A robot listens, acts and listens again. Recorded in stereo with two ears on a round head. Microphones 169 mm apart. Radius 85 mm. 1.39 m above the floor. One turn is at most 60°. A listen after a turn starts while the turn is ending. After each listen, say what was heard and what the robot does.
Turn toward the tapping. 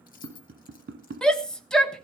The tapping: about 60° right or 120° right. Turn 60° right.
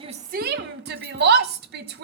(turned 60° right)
Keep listening.
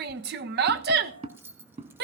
So it is at 40° right. Turn 40° right.
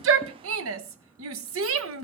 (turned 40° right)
Keep listening.
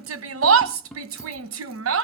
Facing the tapping.